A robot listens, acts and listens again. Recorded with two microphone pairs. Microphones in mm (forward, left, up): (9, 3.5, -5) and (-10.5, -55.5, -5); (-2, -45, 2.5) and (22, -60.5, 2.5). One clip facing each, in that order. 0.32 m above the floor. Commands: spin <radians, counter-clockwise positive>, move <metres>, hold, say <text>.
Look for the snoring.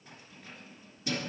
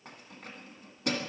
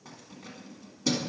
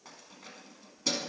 hold
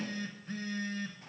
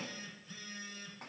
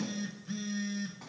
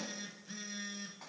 hold
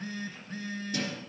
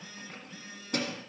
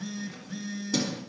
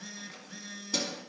say I can't make out snoring, only a phone buzzing and keys jangling.